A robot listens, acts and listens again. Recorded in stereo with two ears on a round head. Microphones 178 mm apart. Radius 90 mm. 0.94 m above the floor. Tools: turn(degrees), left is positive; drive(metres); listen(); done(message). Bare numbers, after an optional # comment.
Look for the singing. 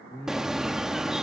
turn(30)
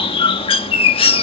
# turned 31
listen()
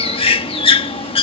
listen()
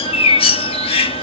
done("I heard singing, but can't make it out now. It was about 30° right or 145° left.")